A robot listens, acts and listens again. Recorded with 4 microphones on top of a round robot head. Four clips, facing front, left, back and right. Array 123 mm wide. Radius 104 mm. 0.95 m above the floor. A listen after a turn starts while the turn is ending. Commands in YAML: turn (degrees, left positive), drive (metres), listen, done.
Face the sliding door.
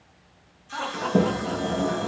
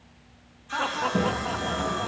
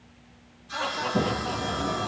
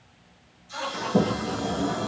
turn: -25
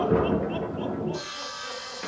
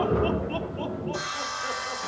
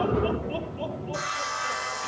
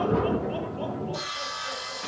done: "Facing the sliding door."